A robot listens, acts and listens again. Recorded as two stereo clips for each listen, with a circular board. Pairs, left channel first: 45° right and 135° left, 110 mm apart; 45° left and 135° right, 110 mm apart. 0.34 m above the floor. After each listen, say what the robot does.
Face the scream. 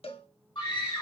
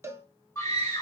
Turn 15° right.
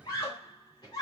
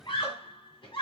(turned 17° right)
Found it: a scream, straight ahead.